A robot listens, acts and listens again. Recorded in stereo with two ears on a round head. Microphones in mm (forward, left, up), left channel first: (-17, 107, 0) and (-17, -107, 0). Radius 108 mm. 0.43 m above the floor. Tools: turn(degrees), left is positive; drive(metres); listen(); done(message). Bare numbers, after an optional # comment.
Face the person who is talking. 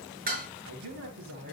# The man speaking: about 60° right or 120° right.
turn(-60)
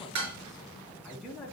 done("Found it: a man speaking, straight ahead.")